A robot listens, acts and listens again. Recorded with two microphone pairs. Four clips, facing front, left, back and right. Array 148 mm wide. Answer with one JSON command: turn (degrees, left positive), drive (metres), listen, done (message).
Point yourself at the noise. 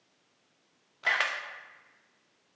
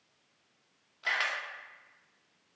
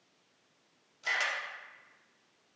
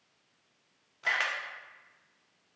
{"turn": -10}
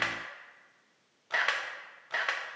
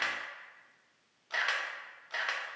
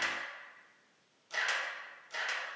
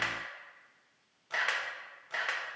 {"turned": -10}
{"done": "Found it: a camera shutter, straight ahead."}